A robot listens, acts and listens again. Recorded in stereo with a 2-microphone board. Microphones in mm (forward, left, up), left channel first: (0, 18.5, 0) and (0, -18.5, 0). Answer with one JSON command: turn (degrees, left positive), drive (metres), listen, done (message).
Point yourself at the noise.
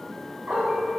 {"turn": -50}
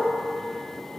{"listen": true}
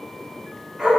{"turn": -20}
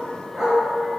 {"turn": -10}
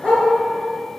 {"done": "Facing the dog barking."}